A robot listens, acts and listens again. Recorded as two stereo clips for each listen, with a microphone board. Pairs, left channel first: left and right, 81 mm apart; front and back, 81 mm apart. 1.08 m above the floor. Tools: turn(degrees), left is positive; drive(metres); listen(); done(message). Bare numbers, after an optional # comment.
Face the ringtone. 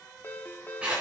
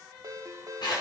# The ringtone: 150° left.
turn(150)
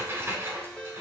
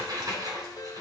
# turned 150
# The ringtone is now 15° left.
turn(15)
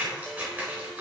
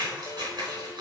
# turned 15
listen()
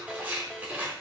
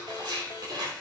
listen()
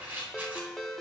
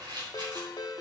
done("Facing the ringtone.")